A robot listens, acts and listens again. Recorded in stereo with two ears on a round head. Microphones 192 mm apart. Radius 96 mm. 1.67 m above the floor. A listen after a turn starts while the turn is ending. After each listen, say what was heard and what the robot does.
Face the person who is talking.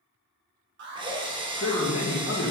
The man speaking: about 65° left or 115° left. Turn 65° left.
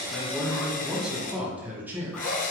So it is at 10° right. Turn 10° right.
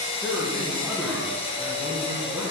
Keep listening.
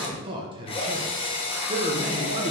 The man speaking is now 25° right. Turn 25° right.
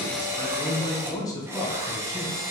The man speaking is now 15° left. Turn 15° left.
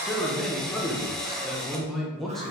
Found it: a man speaking, straight ahead, 1 to 2 m away.